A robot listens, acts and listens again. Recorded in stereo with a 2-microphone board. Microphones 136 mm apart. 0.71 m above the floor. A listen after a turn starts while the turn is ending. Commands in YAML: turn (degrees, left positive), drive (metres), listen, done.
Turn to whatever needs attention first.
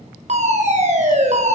turn: -55
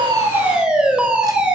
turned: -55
done: "Facing the fire alarm, over 4 m away."